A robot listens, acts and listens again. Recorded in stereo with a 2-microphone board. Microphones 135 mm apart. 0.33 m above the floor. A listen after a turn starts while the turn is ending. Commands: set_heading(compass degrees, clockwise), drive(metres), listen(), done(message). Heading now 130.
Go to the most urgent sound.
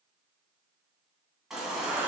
set_heading(160)
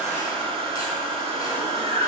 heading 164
set_heading(134)
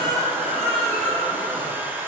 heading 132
drive(1.0)
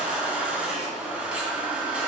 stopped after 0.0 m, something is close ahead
set_heading(142)
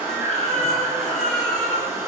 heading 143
done("Blocked. The baby crying is further on, straight ahead.")